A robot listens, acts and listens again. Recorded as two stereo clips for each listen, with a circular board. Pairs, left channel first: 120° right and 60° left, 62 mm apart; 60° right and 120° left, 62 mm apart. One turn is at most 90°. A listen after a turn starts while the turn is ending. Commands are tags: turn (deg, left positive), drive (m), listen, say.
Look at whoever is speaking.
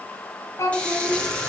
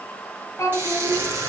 <turn deg="-90"/>
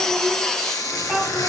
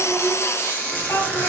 <turn deg="-30"/>
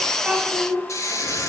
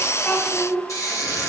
<say>Facing the child speaking, 2 to 4 m away.</say>